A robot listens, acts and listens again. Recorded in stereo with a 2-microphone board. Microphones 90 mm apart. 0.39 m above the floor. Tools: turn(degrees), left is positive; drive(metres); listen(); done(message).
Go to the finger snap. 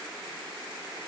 listen()
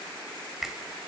turn(degrees=-30)
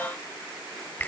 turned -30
turn(degrees=25)
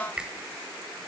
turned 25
turn(degrees=-15)
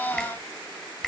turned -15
drive(metres=1.0)
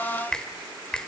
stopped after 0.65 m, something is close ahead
turn(degrees=15)
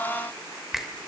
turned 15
done("Arrived at the finger snap, straight ahead.")